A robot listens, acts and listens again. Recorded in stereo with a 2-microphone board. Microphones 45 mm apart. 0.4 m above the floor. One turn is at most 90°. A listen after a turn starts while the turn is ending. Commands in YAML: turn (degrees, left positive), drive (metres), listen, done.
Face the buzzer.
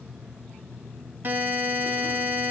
turn: -40
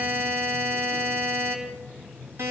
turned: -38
turn: -90
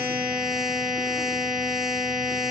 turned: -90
done: "Found it: a buzzer, straight ahead."